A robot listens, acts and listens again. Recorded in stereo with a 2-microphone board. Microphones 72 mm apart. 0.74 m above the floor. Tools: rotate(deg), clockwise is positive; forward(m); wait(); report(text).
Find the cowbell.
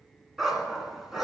wait()
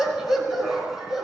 wait()
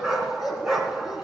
report("I can't make out a cowbell, only a dog barking.")